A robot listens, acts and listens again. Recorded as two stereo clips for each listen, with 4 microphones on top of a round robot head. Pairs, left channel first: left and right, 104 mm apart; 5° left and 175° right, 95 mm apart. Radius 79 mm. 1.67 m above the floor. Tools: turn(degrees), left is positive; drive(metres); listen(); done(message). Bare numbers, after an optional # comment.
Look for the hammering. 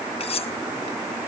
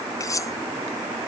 listen()
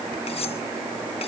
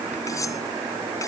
listen()
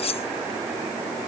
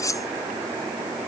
done("I can't make out hammering to turn to.")